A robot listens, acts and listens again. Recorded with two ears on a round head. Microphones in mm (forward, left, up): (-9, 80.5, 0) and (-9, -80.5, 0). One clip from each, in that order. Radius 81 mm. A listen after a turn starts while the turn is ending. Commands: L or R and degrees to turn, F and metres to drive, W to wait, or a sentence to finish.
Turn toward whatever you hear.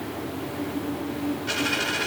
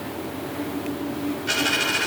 R30
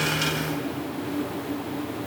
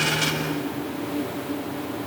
W
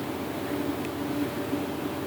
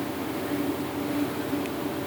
I heard a dropped coin, but can't make it out now. It was about 20° left or 140° right.